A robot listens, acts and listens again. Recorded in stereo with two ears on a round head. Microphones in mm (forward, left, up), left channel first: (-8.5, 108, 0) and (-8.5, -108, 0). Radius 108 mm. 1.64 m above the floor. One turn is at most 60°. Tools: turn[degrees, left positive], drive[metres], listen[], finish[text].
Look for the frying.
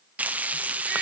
Action: turn[-30]
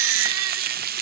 Thought: So it is at 140° right.
Action: turn[-60]
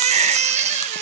Thought: Nothing new. It was at 80° right.
Action: turn[-60]
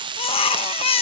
Thought: The frying is now 20° right.
Action: turn[-20]
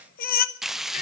Action: finish[Facing the frying, under 1 m away.]